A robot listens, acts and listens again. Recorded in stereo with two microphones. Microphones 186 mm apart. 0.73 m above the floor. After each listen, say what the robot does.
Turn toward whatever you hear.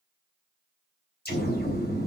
Turn 55° left.
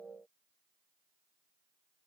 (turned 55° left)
Keep listening.
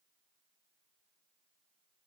I heard an explosion, but can't make it out now. It was about straight ahead or 70° left.